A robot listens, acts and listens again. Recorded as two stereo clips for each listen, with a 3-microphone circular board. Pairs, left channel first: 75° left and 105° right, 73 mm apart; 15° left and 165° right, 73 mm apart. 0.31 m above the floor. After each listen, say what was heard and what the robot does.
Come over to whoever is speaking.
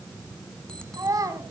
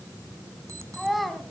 The child speaking: 75° right. Turn 75° right.
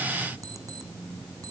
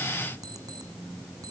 Keep listening.
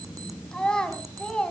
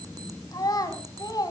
Drive 1.0 m forward.
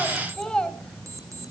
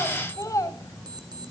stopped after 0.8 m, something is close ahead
I am next to the child speaking.